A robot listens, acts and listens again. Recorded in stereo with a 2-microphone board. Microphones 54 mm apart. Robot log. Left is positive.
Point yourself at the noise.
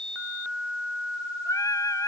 cmd yaw +90
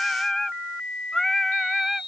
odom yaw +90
end: Facing the singing.